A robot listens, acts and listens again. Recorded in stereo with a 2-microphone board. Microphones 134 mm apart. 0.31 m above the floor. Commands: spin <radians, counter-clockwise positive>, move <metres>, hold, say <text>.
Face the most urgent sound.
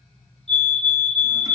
spin 0.87
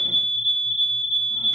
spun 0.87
spin 1.22
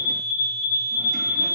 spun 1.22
spin -0.26
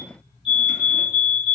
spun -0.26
say Facing the fire alarm.